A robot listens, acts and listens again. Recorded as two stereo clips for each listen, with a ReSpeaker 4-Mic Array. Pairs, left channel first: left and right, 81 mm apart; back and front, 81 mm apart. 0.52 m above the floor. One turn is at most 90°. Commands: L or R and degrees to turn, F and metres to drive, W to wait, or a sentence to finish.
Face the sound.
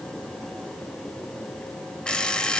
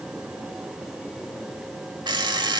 L10
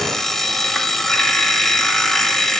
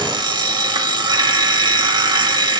Found it: an alarm clock, straight ahead.